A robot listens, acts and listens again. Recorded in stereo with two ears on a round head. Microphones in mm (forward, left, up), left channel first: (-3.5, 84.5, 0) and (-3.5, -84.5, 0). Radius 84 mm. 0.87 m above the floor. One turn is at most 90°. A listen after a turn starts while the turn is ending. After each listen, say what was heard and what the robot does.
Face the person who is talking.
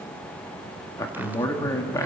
The man speaking: about 15° left or 165° left. Turn 15° left.
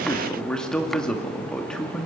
Found it: a man speaking, straight ahead, 1 to 2 m away.